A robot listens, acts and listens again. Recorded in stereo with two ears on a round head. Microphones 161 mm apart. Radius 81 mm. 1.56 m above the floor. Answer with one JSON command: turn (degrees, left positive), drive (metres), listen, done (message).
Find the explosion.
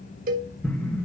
{"turn": 30}
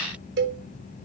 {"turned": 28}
{"listen": true}
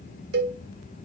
{"done": "I heard an explosion, but can't make it out now. It was about 20° right or 145° left."}